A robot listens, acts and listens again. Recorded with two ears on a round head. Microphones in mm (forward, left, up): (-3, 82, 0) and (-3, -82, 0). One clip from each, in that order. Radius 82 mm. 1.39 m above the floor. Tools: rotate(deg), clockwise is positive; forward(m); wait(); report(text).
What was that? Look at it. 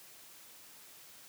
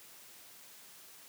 wait()
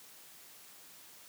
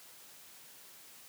wait()
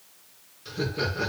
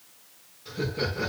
rotate(-35)
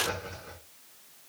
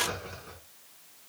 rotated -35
report("Facing the laughter, over 4 m away.")